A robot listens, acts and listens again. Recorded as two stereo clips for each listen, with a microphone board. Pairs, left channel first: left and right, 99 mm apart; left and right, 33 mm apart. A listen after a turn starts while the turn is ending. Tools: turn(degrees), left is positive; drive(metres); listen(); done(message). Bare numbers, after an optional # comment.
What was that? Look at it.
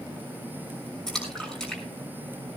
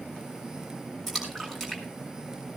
turn(30)
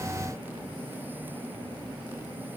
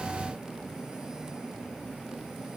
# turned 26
listen()
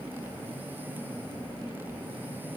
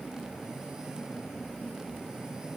done("I heard a splash, but can't make it out now. It was about 20° right or 150° left.")